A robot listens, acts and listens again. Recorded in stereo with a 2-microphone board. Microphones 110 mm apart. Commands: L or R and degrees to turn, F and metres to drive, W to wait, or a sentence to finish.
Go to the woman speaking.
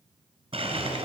W
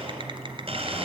W
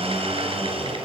I can't make out a woman speaking, only a blender and typing on a keyboard.